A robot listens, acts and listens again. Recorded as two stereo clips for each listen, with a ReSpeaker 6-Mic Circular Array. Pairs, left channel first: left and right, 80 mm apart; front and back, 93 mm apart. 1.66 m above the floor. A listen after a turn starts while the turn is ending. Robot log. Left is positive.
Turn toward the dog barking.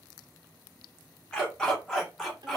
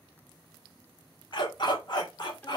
end: Facing the dog barking, 1 to 2 m away.